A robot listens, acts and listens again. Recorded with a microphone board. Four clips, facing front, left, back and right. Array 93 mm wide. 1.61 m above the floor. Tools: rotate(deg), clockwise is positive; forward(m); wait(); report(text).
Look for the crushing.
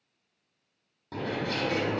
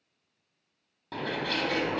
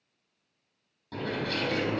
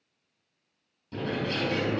wait()
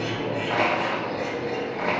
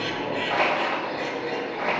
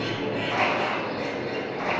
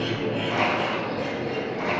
rotate(-40)
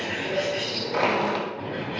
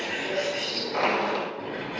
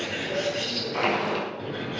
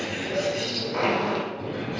report("Facing the crushing, 2 to 4 m away.")